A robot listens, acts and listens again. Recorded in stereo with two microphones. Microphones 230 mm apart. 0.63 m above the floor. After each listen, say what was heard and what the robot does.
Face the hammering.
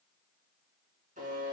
Keep listening.
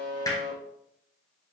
The hammering: about 15° left or 165° left. Turn 15° left.
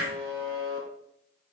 Keep listening.
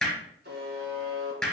Found it: hammering, straight ahead.